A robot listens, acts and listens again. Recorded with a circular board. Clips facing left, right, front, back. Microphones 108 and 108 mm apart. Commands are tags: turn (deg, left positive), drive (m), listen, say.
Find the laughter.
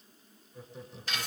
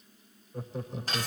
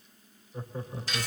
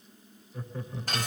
<turn deg="-60"/>
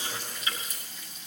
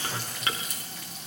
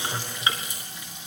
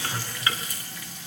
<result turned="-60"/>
<listen/>
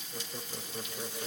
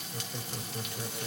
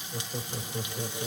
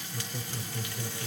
<turn deg="10"/>
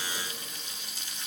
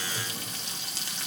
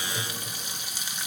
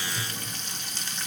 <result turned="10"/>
<listen/>
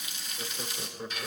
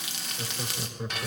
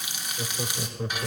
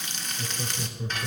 <say>Found it: laughter, straight ahead.</say>